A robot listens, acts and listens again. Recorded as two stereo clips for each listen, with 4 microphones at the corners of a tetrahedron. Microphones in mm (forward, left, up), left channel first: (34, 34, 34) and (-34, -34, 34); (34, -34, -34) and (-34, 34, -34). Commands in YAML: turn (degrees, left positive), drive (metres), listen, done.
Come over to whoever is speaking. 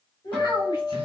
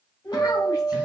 drive: 1.0
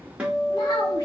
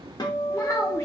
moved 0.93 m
listen: true
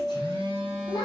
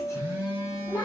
drive: 1.0
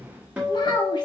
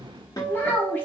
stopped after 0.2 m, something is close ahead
turn: 15
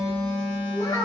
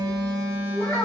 done: "Arrived at the child speaking, straight ahead."